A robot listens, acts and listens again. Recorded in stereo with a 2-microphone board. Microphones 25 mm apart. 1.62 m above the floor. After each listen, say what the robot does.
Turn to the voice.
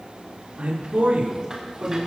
Turn 90° right.
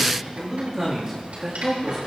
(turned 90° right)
Turn 20° right.
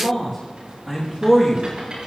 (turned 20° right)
Turn 10° right.
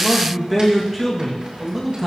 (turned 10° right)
Found it: a man speaking, straight ahead, 2 to 4 m away.